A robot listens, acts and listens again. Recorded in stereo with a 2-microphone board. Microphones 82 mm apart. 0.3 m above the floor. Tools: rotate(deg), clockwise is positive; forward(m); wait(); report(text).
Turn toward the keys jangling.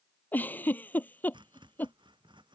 wait()
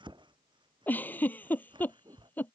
wait()
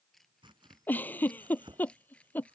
rotate(-15)
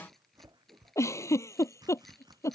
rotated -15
wait()
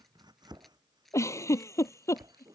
rotate(-30)
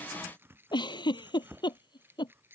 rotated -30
rotate(25)
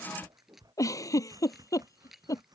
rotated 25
report("Found it: keys jangling, straight ahead.")